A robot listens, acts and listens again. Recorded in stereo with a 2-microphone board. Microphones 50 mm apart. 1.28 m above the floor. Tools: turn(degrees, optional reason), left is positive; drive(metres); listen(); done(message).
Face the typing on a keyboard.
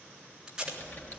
turn(degrees=40, reason="The typing on a keyboard: about 40° left or 140° left.")
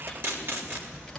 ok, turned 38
done("Facing the typing on a keyboard.")